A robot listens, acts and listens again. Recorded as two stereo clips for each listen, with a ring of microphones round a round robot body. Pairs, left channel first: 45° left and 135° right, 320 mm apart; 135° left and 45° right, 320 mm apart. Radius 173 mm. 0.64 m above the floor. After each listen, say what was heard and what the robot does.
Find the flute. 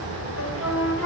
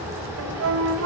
Found it: a flute, straight ahead.